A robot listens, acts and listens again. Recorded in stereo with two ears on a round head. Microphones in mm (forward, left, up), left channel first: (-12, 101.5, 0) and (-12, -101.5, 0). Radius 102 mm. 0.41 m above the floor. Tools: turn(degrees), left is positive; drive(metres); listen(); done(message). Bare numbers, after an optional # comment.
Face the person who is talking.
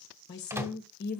# The woman speaking: about 45° left or 135° left.
turn(45)
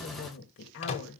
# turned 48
# So it is at 75° left.
turn(75)
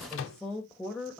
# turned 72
done("Found it: a woman speaking, straight ahead, 1 to 2 m away.")